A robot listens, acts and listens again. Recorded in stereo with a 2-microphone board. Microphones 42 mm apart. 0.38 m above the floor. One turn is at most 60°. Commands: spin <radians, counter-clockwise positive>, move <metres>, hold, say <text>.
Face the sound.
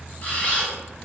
spin 0.61
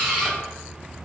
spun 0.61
say Found it: a camera shutter, straight ahead, 1 to 2 m away.